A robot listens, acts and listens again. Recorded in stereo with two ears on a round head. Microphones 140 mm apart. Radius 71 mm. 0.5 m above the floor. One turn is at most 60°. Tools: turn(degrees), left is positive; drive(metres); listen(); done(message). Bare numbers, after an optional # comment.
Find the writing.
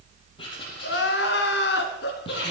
# The writing: about 30° left or 150° left.
turn(30)
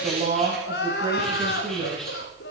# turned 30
listen()
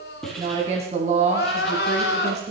done("Facing the writing.")